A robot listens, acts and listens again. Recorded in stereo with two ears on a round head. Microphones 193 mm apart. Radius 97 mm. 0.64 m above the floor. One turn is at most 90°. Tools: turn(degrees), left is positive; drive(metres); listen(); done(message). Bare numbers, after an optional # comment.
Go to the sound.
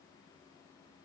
listen()
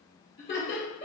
# The laughter: about 45° left or 135° left.
turn(45)
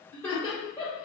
# So it is at 10° left.
turn(10)
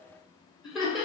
drive(1.0)
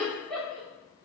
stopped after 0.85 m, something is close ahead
done("I am next to the laughter.")